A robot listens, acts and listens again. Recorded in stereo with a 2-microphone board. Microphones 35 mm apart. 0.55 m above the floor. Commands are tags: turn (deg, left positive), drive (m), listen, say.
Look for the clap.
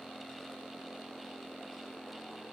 <listen/>
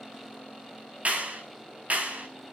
<turn deg="-45"/>
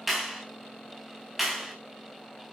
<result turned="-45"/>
<say>Facing the clap, over 4 m away.</say>